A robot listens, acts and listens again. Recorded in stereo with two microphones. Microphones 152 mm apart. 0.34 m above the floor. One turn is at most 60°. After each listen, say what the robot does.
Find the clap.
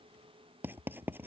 Keep listening.
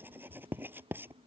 Keep listening.
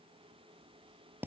I can't make out a clap to turn to.